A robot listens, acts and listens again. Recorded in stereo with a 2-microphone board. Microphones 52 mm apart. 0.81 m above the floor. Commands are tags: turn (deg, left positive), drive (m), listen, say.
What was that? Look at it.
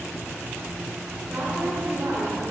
<turn deg="-40"/>
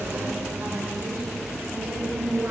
<turn deg="-105"/>
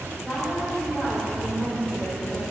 <say>Found it: a woman speaking, straight ahead, over 4 m away.</say>